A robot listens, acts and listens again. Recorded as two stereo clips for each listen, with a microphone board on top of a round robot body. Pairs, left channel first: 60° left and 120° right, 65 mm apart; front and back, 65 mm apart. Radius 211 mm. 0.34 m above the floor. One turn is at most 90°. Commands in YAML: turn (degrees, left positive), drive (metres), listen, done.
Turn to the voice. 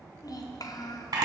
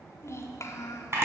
turn: 45
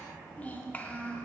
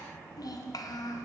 done: "Found it: a child speaking, straight ahead, 1 to 2 m away."